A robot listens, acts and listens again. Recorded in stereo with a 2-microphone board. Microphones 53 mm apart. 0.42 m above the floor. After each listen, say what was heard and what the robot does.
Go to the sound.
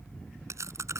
The chewing: about 70° right or 110° right. Turn 70° right.
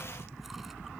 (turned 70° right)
Keep listening.
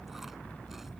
Keep listening.
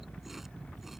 I heard chewing, but can't make it out now. It was about straight ahead or 40° right. I did not reach it.